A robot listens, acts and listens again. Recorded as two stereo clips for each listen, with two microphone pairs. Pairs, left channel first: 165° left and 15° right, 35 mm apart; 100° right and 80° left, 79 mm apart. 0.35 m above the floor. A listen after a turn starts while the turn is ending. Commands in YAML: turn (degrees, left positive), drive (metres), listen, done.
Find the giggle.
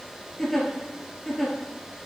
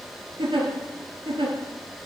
turn: 85
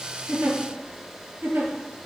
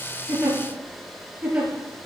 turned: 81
done: "Found it: a giggle, straight ahead, 1 to 2 m away."